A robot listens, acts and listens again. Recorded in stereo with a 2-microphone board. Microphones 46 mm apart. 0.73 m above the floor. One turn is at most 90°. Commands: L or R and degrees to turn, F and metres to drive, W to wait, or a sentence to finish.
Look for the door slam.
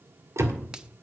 R75
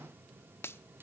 W
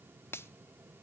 I heard a door slam, but can't make it out now. It was about straight ahead or 30° right.